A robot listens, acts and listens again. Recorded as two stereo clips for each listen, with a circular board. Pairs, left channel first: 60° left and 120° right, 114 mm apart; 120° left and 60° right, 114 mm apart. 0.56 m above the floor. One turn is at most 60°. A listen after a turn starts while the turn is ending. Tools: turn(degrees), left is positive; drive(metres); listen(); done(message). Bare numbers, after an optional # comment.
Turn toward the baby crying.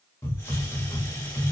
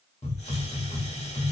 listen()
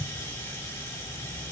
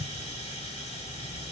listen()
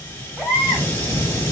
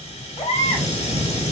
# The baby crying: 155° left.
turn(60)
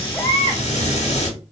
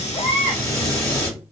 # Nothing new. It was at 95° left.
turn(60)
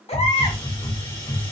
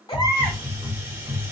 # Nothing new. It was at 35° left.
turn(35)
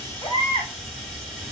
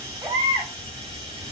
done("Found it: a baby crying, straight ahead, 1 to 2 m away.")